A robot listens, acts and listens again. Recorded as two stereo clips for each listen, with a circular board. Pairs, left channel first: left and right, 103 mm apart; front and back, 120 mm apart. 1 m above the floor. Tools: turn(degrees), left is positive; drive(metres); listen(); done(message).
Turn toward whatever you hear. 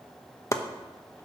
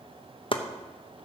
turn(degrees=35)
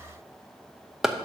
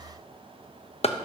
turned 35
done("Facing the chopping, under 1 m away.")